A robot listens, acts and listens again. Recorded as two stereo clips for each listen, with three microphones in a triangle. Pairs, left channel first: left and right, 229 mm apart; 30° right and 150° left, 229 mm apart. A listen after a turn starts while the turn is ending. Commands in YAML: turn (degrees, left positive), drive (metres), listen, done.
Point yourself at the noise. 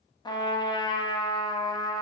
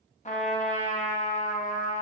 turn: 20
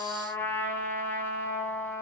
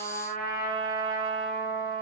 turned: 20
turn: 10
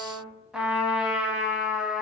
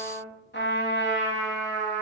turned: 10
done: "Facing the trumpet."